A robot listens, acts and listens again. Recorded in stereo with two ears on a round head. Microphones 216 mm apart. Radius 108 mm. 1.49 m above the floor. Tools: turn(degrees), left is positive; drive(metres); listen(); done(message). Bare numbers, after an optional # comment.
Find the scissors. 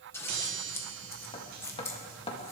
turn(30)
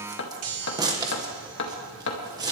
# So it is at 15° right.
turn(-15)
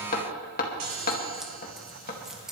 done("Found it: scissors, straight ahead.")